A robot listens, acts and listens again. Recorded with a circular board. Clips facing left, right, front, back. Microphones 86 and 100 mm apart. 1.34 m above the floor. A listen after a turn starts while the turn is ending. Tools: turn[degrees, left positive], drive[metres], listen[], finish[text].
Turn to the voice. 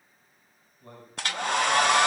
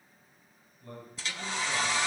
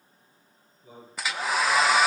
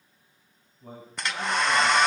Thought: The man speaking: 150° left.
Action: turn[150]
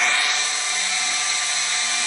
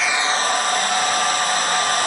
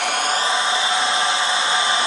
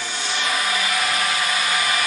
Action: listen[]
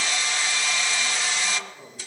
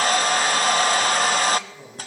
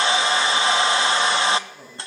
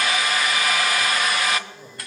Action: finish[Found it: a man speaking, straight ahead.]